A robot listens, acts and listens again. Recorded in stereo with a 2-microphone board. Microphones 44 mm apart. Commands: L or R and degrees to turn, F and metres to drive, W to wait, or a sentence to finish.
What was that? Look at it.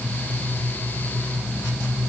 W
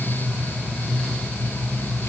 W
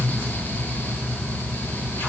I can't make out anything.